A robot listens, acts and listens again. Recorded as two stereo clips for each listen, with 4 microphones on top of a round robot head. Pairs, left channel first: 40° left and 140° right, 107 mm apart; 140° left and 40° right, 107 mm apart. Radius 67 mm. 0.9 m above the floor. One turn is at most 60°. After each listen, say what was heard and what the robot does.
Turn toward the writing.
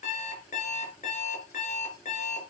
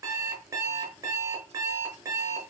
Keep listening.
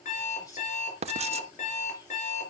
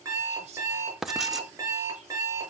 The writing: 130° right. Turn 60° right.
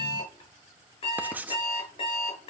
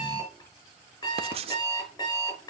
The writing is now 65° right. Turn 60° right.
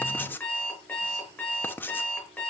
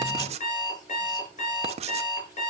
The writing is now 30° right. Turn 30° right.
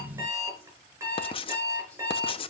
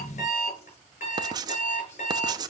The writing is now 10° left. Turn 10° left.
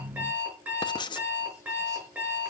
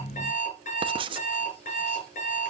Facing the writing.